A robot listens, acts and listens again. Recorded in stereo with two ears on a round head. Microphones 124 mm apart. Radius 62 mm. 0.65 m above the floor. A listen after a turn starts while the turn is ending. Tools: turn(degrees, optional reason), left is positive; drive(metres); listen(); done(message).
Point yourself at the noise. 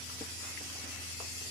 listen()
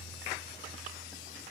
listen()
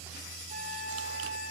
turn(degrees=-60, reason="The flute: about 60° right or 120° right.")
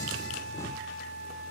turn(degrees=-55, reason="So it is at 55° right.")
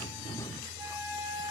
turn(degrees=-25, reason="The flute is now 25° right.")
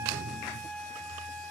turn(degrees=10, reason="The flute is now 10° left.")
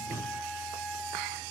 done("Found it: a flute, straight ahead, 2 to 4 m away.")